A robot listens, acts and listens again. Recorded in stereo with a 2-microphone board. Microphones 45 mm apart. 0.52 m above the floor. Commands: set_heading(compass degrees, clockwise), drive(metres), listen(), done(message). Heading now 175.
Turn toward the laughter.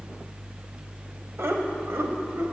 set_heading(245)
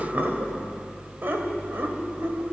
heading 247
set_heading(307)
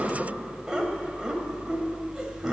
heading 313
set_heading(328)
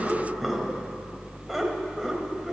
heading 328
done("Facing the laughter, 2 to 4 m away.")